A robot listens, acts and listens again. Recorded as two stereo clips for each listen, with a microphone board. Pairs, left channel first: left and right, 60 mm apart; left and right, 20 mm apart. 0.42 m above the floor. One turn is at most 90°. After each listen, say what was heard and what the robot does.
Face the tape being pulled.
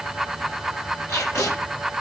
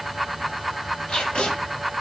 The tape being pulled: about 55° left or 125° left. Turn 55° left.
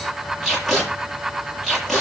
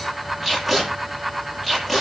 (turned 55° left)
Found it: tape being pulled, straight ahead.